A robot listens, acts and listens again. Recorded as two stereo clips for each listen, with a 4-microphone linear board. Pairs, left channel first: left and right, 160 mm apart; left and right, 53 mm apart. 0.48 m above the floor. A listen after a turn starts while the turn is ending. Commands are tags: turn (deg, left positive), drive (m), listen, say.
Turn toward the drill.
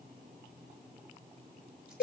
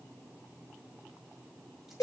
<listen/>
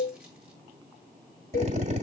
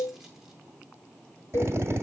<turn deg="-45"/>
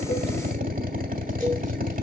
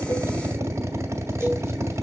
<turn deg="-75"/>
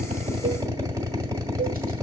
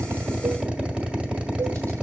<turn deg="-20"/>
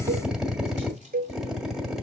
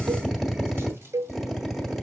<say>Facing the drill.</say>